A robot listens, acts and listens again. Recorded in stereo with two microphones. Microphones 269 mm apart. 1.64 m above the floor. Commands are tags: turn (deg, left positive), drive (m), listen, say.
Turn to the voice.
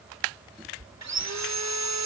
<listen/>
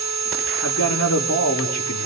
<turn deg="90"/>
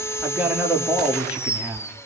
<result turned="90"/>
<say>Facing the man speaking.</say>